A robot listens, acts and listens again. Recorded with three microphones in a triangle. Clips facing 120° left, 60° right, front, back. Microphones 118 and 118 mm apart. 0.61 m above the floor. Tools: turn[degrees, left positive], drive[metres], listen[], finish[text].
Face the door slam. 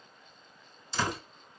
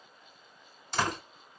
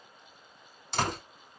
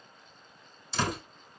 Thought: The door slam: 30° right.
Action: turn[-30]
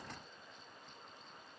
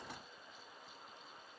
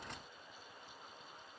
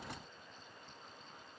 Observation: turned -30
Action: finish[Facing where the door slam came from. I can't hear it now.]